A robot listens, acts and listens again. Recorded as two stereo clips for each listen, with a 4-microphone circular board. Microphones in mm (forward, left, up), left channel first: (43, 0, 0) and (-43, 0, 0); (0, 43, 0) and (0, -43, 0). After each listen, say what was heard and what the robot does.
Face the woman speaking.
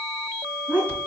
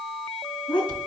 The woman speaking: 110° left. Turn 110° left.
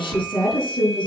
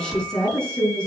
The woman speaking is now 10° left. Turn 10° left.
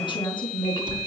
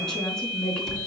The woman speaking is now 10° left. Turn 10° left.
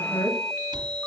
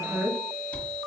Facing the woman speaking, over 4 m away.